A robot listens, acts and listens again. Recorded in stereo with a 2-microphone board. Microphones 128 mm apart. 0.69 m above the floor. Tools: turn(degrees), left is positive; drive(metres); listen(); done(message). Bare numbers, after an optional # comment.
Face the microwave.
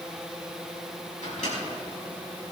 turn(90)
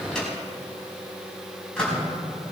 done("Facing the microwave, over 4 m away.")